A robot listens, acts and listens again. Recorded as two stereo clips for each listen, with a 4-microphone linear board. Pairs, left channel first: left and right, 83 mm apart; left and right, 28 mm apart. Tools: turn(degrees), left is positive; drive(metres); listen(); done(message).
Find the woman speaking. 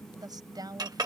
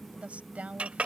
turn(degrees=-55)
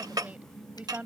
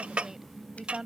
turn(degrees=-20)
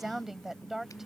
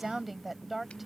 done("Facing the woman speaking.")